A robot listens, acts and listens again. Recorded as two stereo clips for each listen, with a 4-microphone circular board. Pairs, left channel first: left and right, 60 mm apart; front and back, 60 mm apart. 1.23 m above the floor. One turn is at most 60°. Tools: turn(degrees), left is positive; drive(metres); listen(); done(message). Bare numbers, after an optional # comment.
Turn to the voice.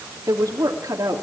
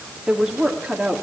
# The woman speaking: 100° right.
turn(-60)
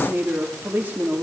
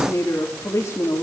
# The woman speaking is now 30° right.
turn(-30)
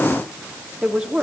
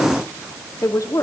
# The woman speaking is now 10° right.
turn(-10)
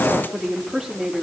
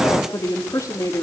done("Found it: a woman speaking, straight ahead.")